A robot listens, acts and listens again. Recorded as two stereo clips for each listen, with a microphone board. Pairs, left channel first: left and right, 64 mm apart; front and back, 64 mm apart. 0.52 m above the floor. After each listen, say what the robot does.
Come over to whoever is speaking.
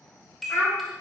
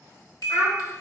Turn 35° left.
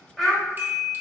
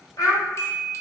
Drive 1.0 m forward.
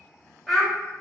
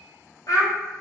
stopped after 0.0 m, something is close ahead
Something is in my way. I am facing the child speaking but have not reached it.